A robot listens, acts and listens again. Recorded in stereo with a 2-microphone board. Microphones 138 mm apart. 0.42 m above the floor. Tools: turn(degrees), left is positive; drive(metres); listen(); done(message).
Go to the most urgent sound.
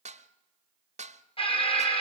turn(degrees=45)
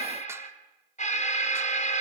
turn(degrees=85)
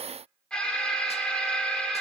drive(metres=1.0)
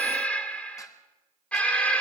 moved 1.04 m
turn(degrees=10)
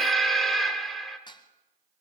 drive(metres=1.0)
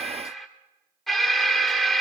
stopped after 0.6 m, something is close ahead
done("Arrived at the alarm, straight ahead.")